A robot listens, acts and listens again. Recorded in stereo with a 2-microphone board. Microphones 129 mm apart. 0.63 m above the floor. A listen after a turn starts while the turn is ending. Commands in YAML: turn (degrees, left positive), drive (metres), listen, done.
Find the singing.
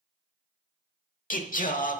turn: 90
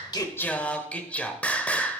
turn: 10
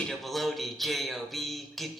done: "Facing the singing."